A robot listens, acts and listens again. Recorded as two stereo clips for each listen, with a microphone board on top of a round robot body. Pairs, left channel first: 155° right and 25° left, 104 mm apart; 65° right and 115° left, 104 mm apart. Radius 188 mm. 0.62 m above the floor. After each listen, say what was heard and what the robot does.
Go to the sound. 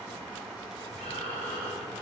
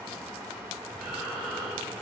The breathing: 155° right. Turn 155° right.
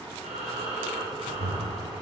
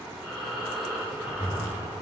The breathing is now 30° left. Turn 30° left.
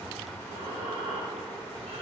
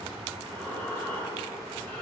Drive 1.0 m forward.
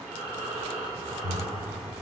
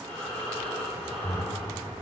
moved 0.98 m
Drive 1.0 m forward.
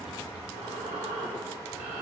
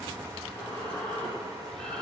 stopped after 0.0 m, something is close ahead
The breathing is now 10° left. Turn 10° left.
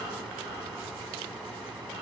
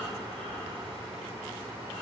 Arrived at the breathing, straight ahead.